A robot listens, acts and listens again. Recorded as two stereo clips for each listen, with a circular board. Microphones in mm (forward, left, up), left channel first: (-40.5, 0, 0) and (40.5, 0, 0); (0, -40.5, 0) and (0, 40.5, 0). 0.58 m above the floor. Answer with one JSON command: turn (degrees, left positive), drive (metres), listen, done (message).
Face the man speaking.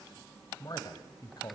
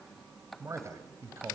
{"turn": 145}
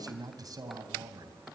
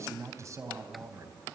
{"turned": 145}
{"turn": 40}
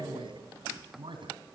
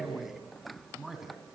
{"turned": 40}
{"done": "Found it: a man speaking, straight ahead."}